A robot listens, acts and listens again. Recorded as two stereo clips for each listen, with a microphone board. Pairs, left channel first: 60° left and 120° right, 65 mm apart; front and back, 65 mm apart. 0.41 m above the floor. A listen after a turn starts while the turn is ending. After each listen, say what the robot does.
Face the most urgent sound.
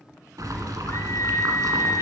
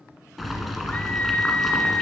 Turn 60° left.
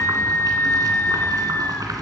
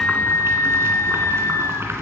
Turn 20° left.
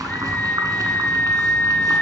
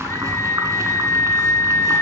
Facing the scream, 1 to 2 m away.